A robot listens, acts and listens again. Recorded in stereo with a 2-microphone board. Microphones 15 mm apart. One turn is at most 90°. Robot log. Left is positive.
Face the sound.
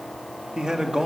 note: The man speaking: about 60° right or 120° right.
cmd yaw -60
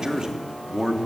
note: So it is at 40° right.
cmd yaw -40
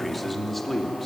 note: The man speaking is now 10° left.
cmd yaw +10
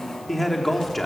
note: The man speaking is now 10° left.
cmd yaw +10
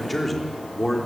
note: The man speaking is now 10° left.
cmd yaw +10
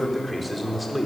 end: Facing the man speaking, 2 to 4 m away.